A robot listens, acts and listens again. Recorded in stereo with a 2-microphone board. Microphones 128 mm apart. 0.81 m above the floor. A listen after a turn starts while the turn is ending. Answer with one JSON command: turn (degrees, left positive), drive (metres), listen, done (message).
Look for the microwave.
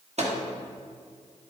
{"turn": -60}
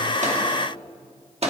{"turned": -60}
{"turn": -60}
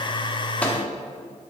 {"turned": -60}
{"listen": true}
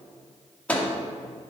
{"turn": 10}
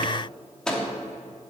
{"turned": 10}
{"done": "Found it: a microwave, straight ahead."}